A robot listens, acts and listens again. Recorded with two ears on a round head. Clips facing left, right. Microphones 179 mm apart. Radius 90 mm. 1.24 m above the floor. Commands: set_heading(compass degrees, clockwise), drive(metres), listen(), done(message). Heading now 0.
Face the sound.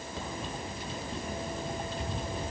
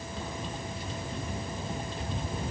listen()
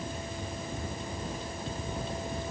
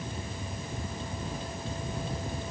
listen()
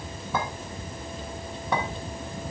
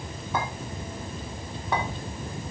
set_heading(270)
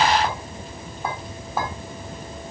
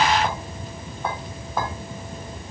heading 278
done("Facing the clink, 2 to 4 m away.")